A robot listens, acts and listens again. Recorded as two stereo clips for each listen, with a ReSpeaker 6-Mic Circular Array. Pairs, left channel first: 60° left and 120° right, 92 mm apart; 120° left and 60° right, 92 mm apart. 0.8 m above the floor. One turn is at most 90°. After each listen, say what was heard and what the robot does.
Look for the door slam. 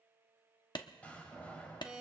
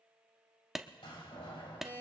The door slam: 130° left. Turn 90° left.
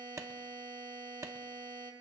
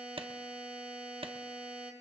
Nothing new. It was at 40° left. Turn 40° left.
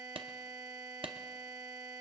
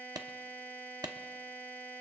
Facing where the door slam came from. I can't hear it now.